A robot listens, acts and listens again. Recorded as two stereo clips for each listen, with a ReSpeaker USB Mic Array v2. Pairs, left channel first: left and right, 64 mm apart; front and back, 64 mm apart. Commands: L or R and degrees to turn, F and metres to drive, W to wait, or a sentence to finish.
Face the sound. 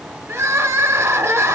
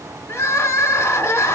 R40
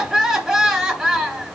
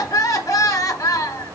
Found it: crying, straight ahead.